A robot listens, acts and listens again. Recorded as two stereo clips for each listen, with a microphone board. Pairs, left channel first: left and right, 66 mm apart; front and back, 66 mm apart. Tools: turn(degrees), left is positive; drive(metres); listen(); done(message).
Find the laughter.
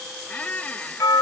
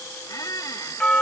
listen()
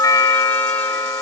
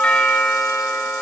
listen()
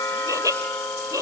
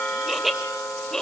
turn(degrees=-80)
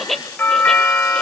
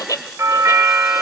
done("Found it: laughter, straight ahead.")